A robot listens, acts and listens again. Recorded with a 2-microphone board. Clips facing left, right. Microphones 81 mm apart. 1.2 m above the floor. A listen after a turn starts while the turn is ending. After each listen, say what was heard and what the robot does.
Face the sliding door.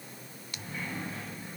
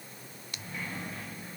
The sliding door: about 20° left or 160° left. Turn 20° left.
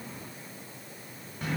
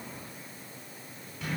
So it is at 135° left. Turn 135° left.
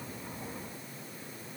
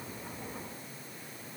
Keep listening.
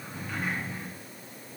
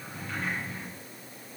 Found it: a sliding door, straight ahead.